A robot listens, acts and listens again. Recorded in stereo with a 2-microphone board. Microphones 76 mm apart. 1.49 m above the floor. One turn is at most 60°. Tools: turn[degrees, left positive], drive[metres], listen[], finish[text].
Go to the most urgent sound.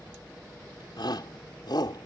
Thought: The shout: about 70° left or 110° left.
Action: turn[60]
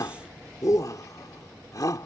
Thought: So it is at 50° left.
Action: turn[50]
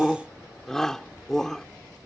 Action: drive[1.0]
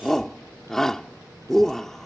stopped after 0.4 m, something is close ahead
Action: finish[Something is in my way. I am facing the shout but have not reached it.]